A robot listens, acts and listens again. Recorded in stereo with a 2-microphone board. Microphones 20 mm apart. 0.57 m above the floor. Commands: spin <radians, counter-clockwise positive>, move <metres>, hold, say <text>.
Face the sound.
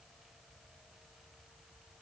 hold
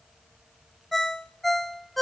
spin 0.52
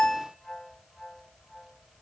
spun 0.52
spin 2.44
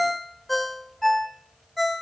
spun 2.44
say Facing the ringtone.